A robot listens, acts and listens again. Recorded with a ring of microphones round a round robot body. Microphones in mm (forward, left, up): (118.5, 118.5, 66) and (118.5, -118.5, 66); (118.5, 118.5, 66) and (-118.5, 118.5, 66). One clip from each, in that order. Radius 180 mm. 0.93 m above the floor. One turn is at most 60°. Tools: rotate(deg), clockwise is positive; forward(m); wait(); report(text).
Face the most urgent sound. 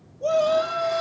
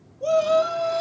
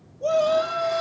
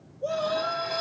rotate(15)
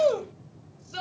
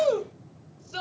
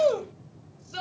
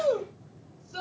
report("Found it: a shout, straight ahead.")